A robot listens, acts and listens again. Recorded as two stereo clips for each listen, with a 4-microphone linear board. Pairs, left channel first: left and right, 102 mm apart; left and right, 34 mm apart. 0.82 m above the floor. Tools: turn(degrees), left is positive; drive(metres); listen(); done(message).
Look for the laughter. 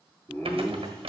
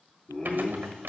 turn(degrees=30)
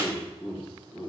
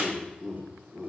turn(degrees=15)
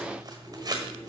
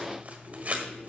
turn(degrees=25)
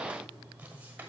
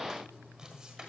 listen()
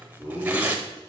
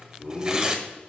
turn(degrees=145)
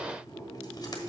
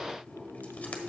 done("Found it: laughter, straight ahead.")